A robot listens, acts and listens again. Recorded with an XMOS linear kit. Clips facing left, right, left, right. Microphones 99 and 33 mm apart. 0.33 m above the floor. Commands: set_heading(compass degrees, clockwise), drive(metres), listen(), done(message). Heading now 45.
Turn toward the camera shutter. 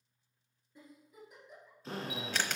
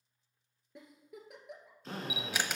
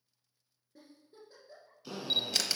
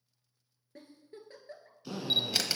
set_heading(75)
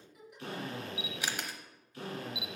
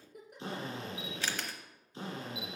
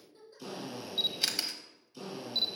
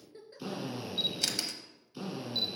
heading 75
set_heading(60)
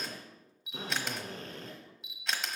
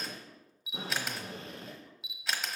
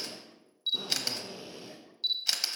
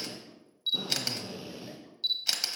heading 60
done("Facing the camera shutter, under 1 m away.")